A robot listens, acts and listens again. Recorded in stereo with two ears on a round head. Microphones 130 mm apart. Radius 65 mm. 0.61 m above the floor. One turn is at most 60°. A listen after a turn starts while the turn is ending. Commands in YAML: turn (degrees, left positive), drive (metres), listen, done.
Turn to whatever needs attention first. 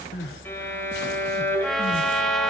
turn: 60
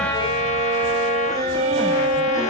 turn: 30
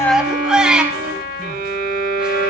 done: "Facing the crying, 1 to 2 m away."